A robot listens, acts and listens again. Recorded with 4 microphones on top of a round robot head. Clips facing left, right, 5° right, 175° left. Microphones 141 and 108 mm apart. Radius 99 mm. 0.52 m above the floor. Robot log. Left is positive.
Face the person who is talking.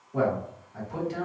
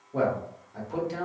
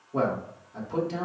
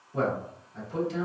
note: The man speaking: 35° right.
cmd yaw -35
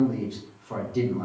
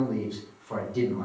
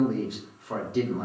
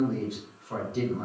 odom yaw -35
end: Facing the man speaking, 1 to 2 m away.